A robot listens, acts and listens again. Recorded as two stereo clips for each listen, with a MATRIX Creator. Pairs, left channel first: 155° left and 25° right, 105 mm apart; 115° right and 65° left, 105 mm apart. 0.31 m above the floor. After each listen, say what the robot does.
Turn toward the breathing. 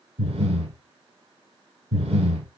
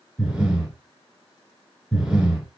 Turn 15° right.
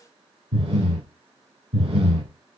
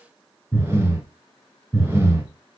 Facing the breathing, under 1 m away.